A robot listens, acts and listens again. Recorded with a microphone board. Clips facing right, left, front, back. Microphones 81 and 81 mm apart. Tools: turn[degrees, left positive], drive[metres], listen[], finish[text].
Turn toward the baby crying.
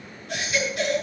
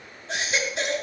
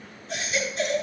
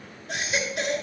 Thought: The baby crying: 155° left.
Action: turn[155]
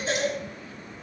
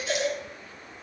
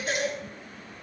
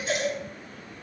Thought: The baby crying is now 40° right.
Action: turn[-40]
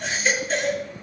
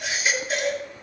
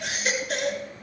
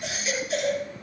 Thought: The baby crying is now 10° left.
Action: turn[10]
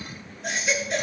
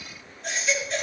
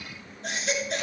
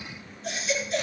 Action: finish[Found it: a baby crying, straight ahead.]